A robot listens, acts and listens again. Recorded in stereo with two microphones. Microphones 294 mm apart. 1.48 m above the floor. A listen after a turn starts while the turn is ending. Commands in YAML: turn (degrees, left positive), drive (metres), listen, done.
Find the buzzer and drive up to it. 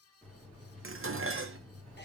turn: 30
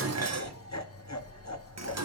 turn: -25
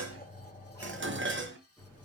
turn: 10
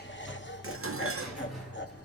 drive: 1.0
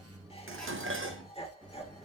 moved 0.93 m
drive: 1.0
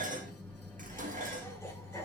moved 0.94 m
drive: 1.0
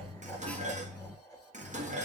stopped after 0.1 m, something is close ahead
done: "Arrived at the buzzer, straight ahead."